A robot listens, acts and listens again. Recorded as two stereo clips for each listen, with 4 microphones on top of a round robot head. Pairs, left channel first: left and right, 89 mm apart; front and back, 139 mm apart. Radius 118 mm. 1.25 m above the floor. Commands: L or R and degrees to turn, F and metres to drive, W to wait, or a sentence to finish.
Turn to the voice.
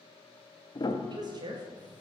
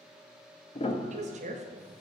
R140
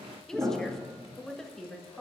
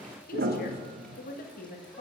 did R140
Found it: a woman speaking, straight ahead, 1 to 2 m away.